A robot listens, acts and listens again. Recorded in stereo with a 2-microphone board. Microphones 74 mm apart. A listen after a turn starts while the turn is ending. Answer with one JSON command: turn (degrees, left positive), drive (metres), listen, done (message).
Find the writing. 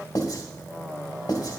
{"turn": 60}
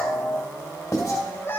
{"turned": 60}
{"turn": 50}
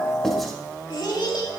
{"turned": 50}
{"listen": true}
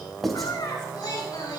{"done": "Found it: writing, straight ahead, 2 to 4 m away."}